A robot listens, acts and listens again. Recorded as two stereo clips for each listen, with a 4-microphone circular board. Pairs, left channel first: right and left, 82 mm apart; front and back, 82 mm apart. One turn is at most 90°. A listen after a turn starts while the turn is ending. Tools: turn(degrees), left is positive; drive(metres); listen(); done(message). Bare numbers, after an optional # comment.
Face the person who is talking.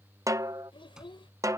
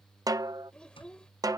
# The child speaking: 80° right.
turn(-80)
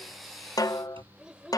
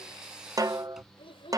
# The child speaking is now 10° left.
turn(10)
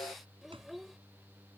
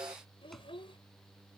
done("Facing the child speaking.")